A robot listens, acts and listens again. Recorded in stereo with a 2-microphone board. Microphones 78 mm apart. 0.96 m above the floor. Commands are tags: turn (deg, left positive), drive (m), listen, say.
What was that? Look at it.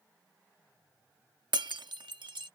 <turn deg="-90"/>
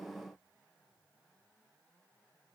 <say>Facing where the breaking glass came from. I can't hear it now.</say>